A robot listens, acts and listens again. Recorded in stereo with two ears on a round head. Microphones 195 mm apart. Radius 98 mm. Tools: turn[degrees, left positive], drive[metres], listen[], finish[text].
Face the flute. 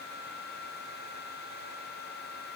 Action: listen[]
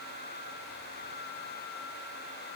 Action: listen[]
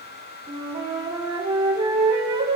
Thought: The flute: about 25° right or 155° right.
Action: turn[-25]
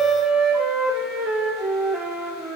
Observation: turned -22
Action: finish[Found it: a flute, straight ahead.]